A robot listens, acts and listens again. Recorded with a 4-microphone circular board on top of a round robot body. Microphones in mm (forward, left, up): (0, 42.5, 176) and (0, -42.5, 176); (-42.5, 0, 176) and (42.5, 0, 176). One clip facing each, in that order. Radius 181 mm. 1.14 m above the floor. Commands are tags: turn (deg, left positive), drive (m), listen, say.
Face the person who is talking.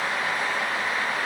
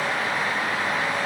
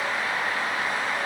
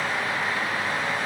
<listen/>
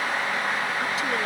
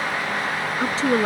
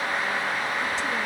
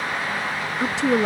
<turn deg="-30"/>
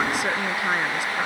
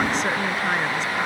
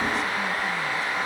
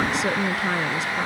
<listen/>
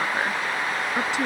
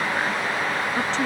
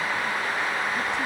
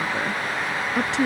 <turn deg="10"/>
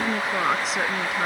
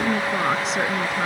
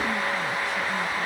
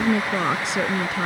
<say>Facing the woman speaking.</say>